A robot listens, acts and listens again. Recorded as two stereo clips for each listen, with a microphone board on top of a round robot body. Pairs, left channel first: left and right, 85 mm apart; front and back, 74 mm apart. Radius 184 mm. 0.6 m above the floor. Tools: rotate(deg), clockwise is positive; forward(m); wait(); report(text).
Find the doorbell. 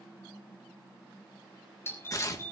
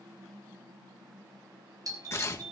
rotate(-150)
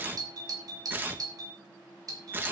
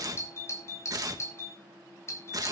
rotate(50)
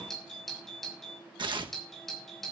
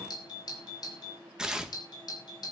report("Facing the doorbell.")